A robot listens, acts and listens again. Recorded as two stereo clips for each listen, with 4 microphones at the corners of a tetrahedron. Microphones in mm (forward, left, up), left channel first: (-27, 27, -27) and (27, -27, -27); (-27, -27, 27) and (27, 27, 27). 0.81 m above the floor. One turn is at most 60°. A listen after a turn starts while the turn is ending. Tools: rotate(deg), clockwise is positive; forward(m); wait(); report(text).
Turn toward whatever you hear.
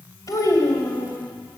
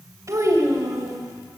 rotate(-60)
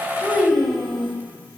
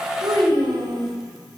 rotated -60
rotate(-45)
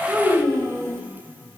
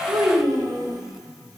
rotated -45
report("Found it: a child speaking, straight ahead, 2 to 4 m away.")